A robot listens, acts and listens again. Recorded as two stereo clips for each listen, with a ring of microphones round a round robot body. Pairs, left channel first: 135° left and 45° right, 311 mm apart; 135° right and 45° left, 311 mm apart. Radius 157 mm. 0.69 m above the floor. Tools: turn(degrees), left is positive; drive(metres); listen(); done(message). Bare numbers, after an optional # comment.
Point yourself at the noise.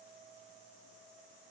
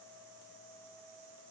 listen()
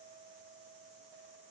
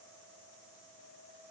listen()
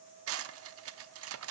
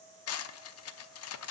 # The cutlery clinking: 90° right.
turn(-90)
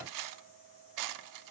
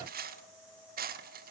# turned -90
# The cutlery clinking is now 15° right.
turn(-15)
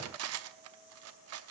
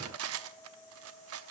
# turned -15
done("Facing the cutlery clinking.")